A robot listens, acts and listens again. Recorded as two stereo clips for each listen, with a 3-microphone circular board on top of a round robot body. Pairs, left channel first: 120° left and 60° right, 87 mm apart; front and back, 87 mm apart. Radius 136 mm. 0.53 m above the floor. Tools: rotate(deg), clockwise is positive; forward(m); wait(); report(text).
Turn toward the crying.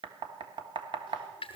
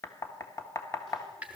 wait()
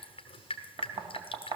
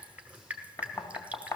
wait()
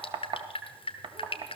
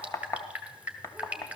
report("I can't make out crying to turn to.")